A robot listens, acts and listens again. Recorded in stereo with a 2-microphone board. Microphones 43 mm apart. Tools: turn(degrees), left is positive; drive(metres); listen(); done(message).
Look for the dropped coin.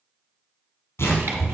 listen()
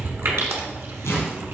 listen()
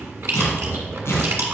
done("I can't make out a dropped coin, only chewing and tearing paper.")